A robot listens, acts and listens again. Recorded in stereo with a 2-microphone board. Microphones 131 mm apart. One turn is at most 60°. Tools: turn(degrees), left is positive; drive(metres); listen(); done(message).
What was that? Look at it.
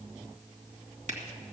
turn(degrees=-55)
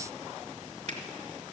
turn(degrees=-60)
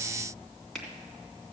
done("Found it: a finger snap, straight ahead.")